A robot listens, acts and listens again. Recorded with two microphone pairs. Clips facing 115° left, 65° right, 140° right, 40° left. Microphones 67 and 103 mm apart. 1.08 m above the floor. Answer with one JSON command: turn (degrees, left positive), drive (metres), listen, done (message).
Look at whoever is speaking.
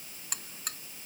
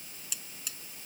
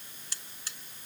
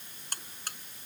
{"listen": true}
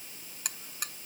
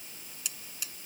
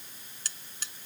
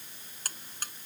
{"listen": true}
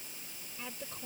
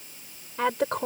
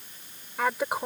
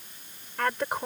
{"turn": -60}
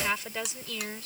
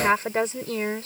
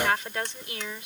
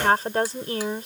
{"turn": -15}
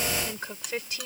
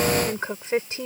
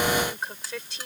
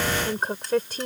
{"done": "Found it: a woman speaking, straight ahead."}